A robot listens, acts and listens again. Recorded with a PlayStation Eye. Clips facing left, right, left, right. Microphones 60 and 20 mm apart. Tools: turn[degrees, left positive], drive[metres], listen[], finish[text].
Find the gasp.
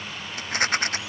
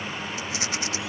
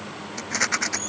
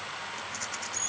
Action: listen[]
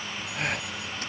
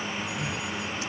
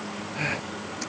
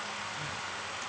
Thought: The gasp: about 70° left or 110° left.
Action: turn[70]
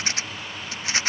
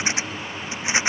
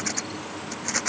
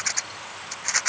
Action: listen[]
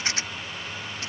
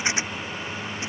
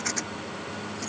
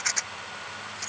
Action: finish[I heard a gasp, but can't make it out now. It was about straight ahead or 40° left.]